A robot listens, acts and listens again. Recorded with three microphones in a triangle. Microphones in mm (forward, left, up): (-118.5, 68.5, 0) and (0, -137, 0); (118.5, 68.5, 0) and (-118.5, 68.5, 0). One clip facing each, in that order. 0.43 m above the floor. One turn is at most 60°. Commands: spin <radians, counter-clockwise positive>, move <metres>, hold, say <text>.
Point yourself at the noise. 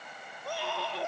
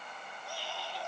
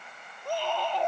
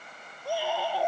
spin 1.05
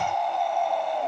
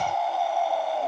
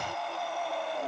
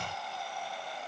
spin 0.44
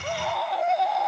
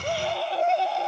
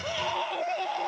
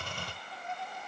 say Found it: a scream, straight ahead.